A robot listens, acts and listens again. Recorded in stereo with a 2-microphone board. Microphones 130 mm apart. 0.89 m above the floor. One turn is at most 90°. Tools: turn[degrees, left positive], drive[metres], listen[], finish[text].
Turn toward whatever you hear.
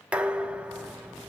Action: turn[-30]
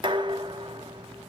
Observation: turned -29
Thought: So it is at 140° right.
Action: turn[-90]
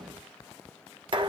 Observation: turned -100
Thought: The dishes clattering is now 40° right.
Action: turn[-40]
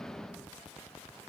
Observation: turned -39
Action: finish[Found it: dishes clattering, straight ahead, 1 to 2 m away.]